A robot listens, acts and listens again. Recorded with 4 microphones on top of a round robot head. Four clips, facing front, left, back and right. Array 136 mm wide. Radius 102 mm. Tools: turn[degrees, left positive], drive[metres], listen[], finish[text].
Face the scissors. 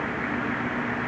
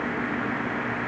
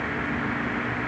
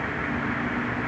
Action: listen[]
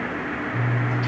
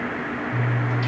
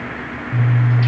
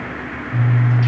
Thought: The scissors: 160° left.
Action: turn[160]
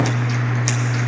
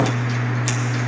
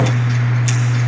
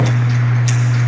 Thought: The scissors is now 40° left.
Action: turn[40]
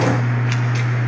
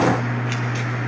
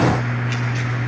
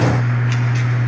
Thought: The scissors is now 10° left.
Action: turn[10]
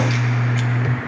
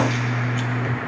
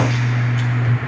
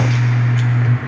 Action: finish[Facing the scissors.]